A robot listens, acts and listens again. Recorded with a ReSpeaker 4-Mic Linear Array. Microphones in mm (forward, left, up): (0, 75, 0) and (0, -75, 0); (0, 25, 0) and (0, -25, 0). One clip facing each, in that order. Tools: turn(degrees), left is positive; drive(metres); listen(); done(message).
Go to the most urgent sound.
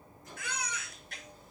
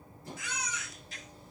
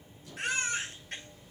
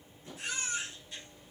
turn(degrees=70)
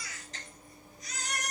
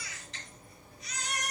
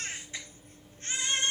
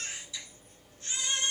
turn(degrees=40)
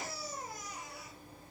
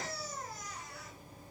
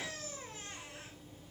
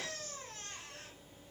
turn(degrees=10)
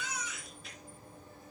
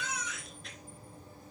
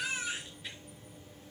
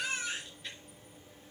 drive(metres=1.0)
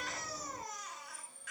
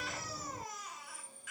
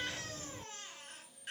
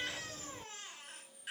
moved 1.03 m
turn(degrees=-10)
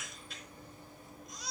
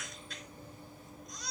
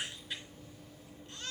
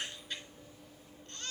drive(metres=1.0)
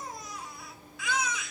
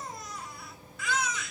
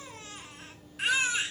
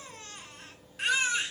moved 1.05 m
drive(metres=1.0)
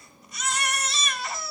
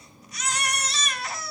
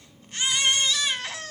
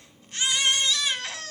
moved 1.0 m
drive(metres=1.0)
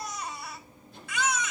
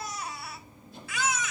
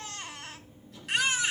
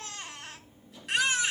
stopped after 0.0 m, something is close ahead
done("I am next to the baby crying.")